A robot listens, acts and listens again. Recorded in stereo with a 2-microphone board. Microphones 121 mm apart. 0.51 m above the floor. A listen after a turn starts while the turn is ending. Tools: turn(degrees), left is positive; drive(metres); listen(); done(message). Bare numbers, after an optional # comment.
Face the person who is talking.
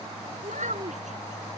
turn(-90)
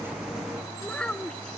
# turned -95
# So it is at 10° left.
turn(10)
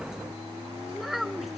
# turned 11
done("Found it: a child speaking, straight ahead.")